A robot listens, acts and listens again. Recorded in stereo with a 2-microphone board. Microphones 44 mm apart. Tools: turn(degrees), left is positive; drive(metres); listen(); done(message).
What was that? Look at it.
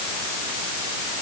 listen()
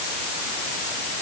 listen()
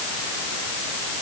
done("I can't make out anything.")